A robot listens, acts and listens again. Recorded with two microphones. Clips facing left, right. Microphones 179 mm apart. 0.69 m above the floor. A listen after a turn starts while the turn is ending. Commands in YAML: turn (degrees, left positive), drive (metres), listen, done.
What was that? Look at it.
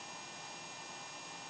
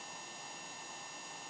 listen: true
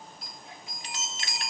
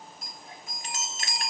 turn: -45
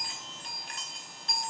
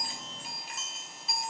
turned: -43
done: "Found it: a chime, straight ahead."